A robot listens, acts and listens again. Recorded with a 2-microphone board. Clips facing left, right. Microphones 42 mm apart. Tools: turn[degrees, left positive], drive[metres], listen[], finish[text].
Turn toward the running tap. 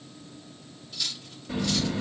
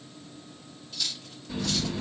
Thought: The running tap: about 40° left or 140° left.
Action: turn[40]
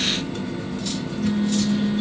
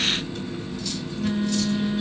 Thought: So it is at 100° left.
Action: turn[100]
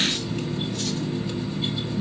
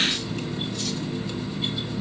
Thought: The running tap is now 10° left.
Action: turn[10]
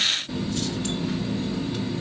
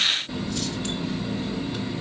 Action: finish[Found it: a running tap, straight ahead.]